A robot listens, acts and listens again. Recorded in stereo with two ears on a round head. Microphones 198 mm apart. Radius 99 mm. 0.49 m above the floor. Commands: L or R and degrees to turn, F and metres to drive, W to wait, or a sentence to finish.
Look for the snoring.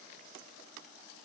W
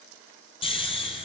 L25
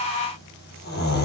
L130
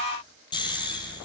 L20
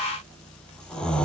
Facing the snoring.